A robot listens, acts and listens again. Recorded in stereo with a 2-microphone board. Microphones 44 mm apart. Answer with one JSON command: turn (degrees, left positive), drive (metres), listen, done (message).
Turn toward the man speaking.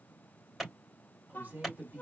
{"turn": -45}
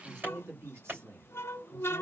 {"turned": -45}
{"turn": -100}
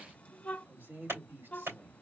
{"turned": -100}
{"turn": -55}
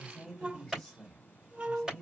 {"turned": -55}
{"done": "Found it: a man speaking, straight ahead."}